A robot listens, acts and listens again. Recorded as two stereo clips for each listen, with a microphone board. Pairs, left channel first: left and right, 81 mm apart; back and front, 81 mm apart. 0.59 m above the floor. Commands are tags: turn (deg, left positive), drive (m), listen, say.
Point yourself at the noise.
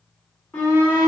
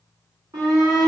<turn deg="25"/>
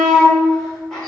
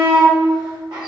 <say>Facing the shout, 2 to 4 m away.</say>